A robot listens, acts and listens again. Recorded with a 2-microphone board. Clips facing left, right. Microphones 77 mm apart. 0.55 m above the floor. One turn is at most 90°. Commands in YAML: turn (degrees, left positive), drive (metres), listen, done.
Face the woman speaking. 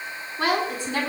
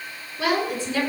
turn: 60
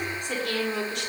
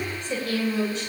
turn: 60
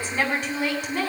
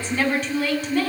turn: 10
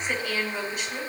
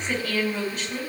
done: "Found it: a woman speaking, straight ahead."